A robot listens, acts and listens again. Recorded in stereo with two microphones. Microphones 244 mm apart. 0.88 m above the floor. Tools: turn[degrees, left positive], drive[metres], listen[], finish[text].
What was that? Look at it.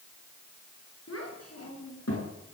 Action: turn[90]
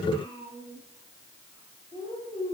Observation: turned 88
Thought: So it is at 25° left.
Action: turn[25]
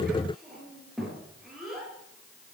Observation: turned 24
Action: finish[Facing the child speaking, over 4 m away.]